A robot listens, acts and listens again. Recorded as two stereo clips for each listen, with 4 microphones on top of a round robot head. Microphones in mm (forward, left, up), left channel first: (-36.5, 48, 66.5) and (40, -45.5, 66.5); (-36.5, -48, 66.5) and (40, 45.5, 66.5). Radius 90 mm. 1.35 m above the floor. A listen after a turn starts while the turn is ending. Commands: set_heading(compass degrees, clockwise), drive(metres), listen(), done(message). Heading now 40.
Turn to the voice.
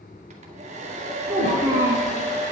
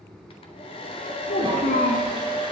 set_heading(150)
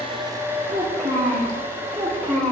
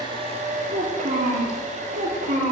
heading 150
set_heading(125)
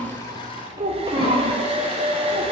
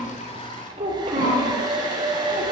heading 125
done("Facing the child speaking, 2 to 4 m away.")